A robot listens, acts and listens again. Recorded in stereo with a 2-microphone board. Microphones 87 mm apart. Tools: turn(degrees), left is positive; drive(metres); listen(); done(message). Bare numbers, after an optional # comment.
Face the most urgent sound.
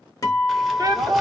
# The shout: about 45° right or 135° right.
turn(-45)
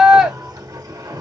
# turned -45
# So it is at 10° right.
turn(-10)
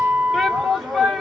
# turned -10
done("Found it: a shout, straight ahead, 1 to 2 m away.")